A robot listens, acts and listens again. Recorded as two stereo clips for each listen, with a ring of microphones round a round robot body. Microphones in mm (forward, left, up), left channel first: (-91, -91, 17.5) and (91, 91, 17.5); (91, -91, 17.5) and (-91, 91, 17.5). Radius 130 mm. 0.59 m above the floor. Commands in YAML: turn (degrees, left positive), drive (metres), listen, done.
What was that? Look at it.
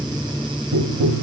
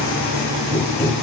turn: 50
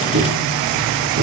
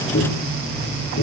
done: "Facing the tapping."